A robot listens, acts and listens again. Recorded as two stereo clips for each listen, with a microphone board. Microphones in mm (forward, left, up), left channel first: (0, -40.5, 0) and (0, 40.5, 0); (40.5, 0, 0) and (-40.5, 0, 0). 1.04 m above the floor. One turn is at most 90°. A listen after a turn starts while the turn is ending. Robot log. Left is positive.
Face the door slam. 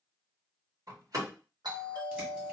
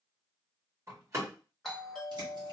note: The door slam: 130° left.
cmd yaw +90
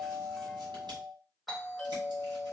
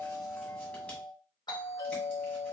note: Nothing new. It was at 40° left.
cmd yaw +40
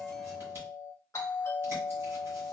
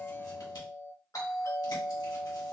end: I heard a door slam from this way, but can't make it out now.